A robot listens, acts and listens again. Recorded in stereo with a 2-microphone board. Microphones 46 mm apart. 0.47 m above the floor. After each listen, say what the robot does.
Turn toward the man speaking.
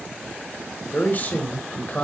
Turn 40° left.
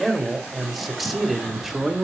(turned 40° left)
Found it: a man speaking, straight ahead.